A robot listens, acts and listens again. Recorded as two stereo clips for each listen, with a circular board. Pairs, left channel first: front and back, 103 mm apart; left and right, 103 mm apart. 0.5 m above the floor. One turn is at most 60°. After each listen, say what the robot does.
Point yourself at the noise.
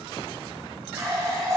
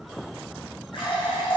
Turn 60° left.
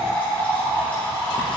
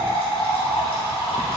Turn 60° left.
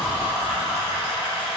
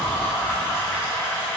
Turn 25° left.
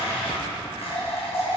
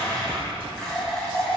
Facing the running tap, 2 to 4 m away.